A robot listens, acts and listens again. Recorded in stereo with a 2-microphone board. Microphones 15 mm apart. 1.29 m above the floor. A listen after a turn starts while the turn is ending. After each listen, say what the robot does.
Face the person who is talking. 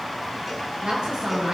Turn 70° right.
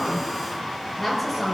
Facing the woman speaking, over 4 m away.